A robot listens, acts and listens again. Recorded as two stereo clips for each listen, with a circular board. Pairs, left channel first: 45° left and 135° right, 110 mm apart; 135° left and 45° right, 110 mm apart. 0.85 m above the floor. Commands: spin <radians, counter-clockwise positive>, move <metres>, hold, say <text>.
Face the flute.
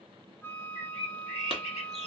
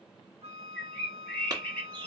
spin -0.44
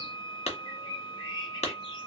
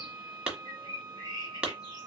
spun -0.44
say Found it: a flute, straight ahead, 1 to 2 m away.